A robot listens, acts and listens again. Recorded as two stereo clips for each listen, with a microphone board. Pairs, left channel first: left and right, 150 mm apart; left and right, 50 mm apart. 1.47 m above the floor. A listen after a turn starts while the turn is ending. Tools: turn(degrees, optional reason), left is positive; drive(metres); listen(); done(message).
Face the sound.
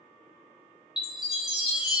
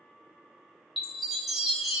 turn(degrees=-30)
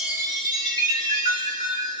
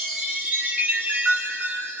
turn(degrees=-150, reason="So it is at 150° right.")
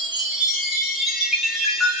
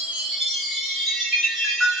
done("Facing the chime.")